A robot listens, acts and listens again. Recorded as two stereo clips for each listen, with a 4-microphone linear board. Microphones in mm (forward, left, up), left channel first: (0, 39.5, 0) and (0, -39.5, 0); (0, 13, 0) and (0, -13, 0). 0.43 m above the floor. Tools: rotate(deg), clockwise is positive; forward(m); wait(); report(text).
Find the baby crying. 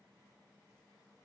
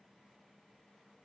wait()
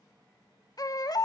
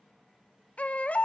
rotate(-55)
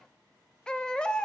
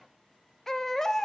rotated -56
rotate(-15)
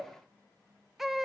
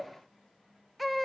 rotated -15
report("Found it: a baby crying, straight ahead.")